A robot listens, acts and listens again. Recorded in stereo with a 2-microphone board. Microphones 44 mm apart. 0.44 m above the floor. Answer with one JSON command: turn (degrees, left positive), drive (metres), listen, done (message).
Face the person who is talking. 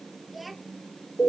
{"turn": 30}
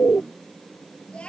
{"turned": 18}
{"turn": 155}
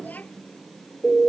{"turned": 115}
{"turn": 35}
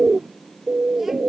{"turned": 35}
{"listen": true}
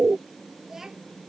{"turn": -10}
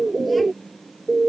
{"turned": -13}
{"listen": true}
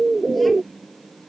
{"listen": true}
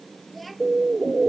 {"done": "Found it: a child speaking, straight ahead."}